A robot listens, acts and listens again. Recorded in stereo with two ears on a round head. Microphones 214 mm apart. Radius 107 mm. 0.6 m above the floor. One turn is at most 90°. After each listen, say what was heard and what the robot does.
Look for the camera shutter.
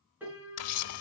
The camera shutter: about 70° left or 110° left. Turn 70° left.
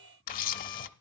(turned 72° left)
So it is at 35° left. Turn 35° left.
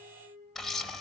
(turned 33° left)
Found it: a camera shutter, straight ahead.